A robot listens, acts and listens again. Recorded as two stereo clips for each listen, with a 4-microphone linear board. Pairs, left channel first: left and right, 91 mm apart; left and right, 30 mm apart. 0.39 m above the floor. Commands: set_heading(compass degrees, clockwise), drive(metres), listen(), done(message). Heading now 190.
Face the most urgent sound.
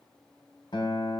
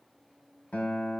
listen()
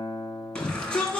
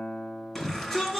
set_heading(160)
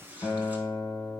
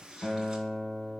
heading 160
listen()
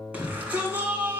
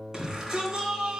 set_heading(175)
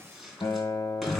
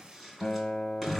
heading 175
done("Facing the shout.")